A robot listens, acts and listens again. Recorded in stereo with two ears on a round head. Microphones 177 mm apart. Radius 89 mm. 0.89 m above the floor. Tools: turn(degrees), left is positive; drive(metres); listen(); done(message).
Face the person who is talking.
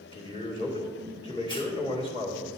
turn(degrees=30)
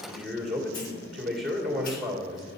done("Facing the man speaking.")